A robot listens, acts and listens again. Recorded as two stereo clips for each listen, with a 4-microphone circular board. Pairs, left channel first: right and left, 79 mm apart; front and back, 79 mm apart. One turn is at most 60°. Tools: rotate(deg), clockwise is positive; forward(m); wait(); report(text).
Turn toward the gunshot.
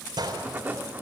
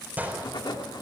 rotate(-60)
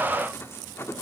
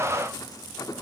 rotate(-50)
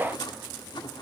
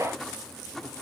report("I heard a gunshot from this way, but can't make it out now.")